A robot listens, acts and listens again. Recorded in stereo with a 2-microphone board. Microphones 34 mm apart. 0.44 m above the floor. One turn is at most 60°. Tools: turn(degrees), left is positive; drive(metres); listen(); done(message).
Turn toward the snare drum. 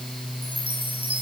listen()
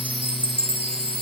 listen()
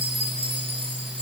done("I can't make out a snare drum, only a chime.")